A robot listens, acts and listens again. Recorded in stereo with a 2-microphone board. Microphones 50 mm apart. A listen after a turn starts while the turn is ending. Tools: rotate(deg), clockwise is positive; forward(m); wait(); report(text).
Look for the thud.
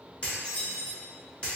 wait()
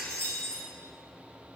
wait()
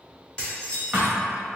rotate(30)
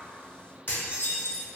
wait()
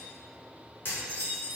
report("I heard a thud, but can't make it out now. It was about straight ahead or 120° right.")